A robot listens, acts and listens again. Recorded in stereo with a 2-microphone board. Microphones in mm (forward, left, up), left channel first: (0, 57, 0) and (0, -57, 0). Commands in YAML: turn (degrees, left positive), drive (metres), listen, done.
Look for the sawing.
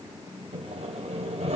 turn: -70
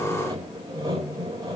turn: -35
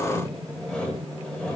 done: "Facing the sawing, over 4 m away."